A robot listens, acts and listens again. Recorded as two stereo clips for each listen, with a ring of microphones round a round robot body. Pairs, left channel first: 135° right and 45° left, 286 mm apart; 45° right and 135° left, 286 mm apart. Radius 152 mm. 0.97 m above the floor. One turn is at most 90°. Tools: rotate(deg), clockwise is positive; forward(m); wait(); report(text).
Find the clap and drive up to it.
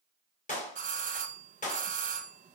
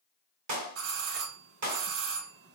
rotate(-90)
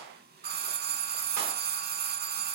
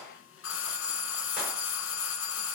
rotate(-70)
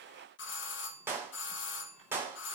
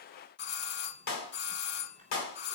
rotate(35)
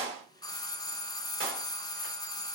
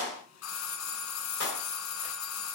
forward(1.0)
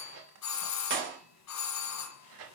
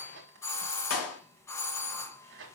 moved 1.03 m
forward(1.0)
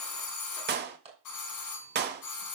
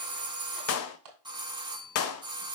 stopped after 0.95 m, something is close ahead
rotate(10)
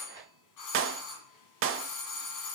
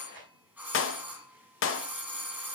report("Arrived at the clap, straight ahead.")